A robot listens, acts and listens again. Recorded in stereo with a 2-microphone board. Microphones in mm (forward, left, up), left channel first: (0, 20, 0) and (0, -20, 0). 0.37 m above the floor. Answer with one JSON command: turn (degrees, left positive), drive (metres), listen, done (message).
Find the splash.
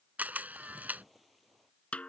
{"turn": 30}
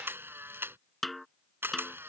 {"listen": true}
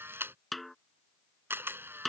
{"done": "I heard a splash, but can't make it out now. It was about 30° right or 150° left."}